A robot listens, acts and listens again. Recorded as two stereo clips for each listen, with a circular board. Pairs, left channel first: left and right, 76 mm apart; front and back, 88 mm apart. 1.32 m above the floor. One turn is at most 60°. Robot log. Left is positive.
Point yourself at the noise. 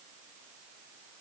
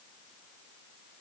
cmd idle
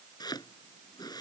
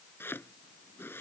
note: The chopping: 65° left.
cmd yaw +60
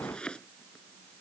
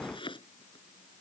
note: The chopping is now 15° left.
cmd yaw +15
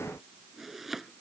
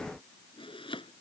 end: Facing the chopping.